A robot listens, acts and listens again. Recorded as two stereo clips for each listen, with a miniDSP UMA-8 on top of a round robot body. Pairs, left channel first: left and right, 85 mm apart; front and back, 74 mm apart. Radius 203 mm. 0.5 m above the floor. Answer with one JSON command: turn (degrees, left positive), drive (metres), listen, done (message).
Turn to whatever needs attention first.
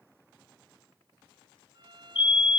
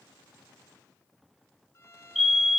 {"turn": 95}
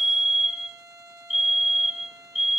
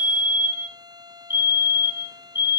{"done": "Facing the fire alarm."}